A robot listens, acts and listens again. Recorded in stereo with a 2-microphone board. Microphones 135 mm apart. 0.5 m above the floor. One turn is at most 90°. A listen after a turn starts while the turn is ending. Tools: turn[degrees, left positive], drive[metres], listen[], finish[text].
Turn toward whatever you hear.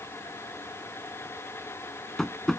Action: turn[30]
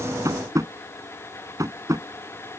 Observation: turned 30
Thought: So it is at 25° right.
Action: turn[-25]
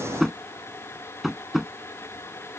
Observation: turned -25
Action: finish[Found it: tapping, straight ahead.]